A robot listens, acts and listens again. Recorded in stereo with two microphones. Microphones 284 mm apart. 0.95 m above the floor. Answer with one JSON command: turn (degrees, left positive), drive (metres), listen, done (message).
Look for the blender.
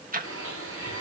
{"turn": -50}
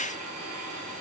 {"turn": -80}
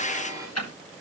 {"turn": -10}
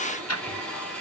{"done": "Facing the blender, 2 to 4 m away."}